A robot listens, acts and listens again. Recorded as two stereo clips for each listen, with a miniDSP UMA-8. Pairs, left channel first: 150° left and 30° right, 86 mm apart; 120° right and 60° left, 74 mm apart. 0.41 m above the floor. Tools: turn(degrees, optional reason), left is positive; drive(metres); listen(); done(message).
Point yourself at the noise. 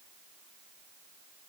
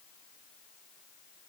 listen()
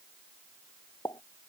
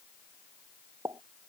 turn(degrees=105, reason="The pop: 105° left.")
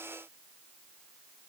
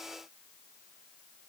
done("I heard a pop from this way, but can't make it out now.")